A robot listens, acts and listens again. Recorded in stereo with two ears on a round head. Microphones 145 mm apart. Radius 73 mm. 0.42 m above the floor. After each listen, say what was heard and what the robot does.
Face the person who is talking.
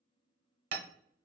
Keep listening.
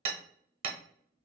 Keep listening.
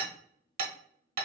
I can't make out anyone speaking to turn to.